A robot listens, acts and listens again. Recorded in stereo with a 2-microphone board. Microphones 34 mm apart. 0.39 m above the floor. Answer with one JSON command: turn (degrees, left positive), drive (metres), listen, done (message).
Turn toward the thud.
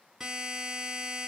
{"listen": true}
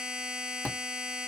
{"turn": 75}
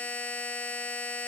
{"listen": true}
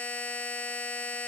{"done": "I heard a thud, but can't make it out now. It was about straight ahead or 30° left."}